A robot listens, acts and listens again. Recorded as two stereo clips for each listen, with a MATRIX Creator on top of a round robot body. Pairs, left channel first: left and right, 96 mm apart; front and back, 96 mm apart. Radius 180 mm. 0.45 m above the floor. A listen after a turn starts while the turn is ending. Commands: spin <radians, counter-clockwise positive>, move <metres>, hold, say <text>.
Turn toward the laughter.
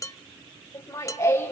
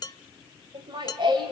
spin 2.62
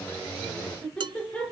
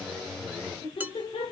spin 0.26
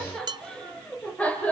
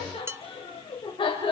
spin 0.35
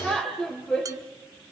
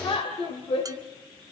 spin 0.17
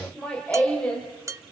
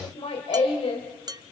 spin 0.26
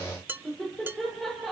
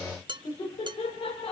say Found it: laughter, straight ahead.